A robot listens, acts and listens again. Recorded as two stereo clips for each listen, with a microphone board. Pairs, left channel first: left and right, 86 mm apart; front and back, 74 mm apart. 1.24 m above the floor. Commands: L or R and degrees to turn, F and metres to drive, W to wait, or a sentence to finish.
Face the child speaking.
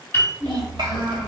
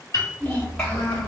R85
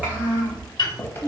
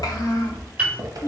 R40
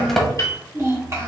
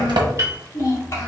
R40
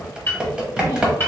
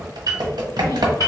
W
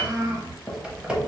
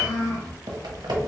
R45
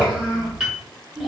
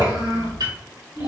R10
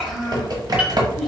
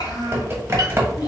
Found it: a child speaking, straight ahead, 2 to 4 m away.